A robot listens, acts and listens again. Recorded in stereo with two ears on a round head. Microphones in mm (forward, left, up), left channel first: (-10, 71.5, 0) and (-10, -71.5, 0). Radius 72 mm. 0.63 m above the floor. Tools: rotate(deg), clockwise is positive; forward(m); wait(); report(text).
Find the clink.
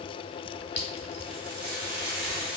rotate(-40)
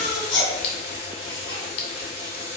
wait()
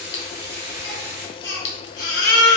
rotate(-100)
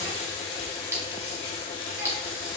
rotate(15)
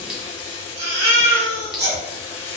wait()
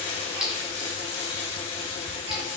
report("Found it: a clink, straight ahead, 1 to 2 m away.")